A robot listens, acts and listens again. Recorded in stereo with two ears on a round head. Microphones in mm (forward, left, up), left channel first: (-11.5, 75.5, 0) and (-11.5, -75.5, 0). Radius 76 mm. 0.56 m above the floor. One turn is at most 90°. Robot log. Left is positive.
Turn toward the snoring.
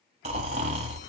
note: The snoring: about 40° right or 140° right.
cmd yaw -40
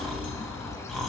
end: Facing the snoring, 1 to 2 m away.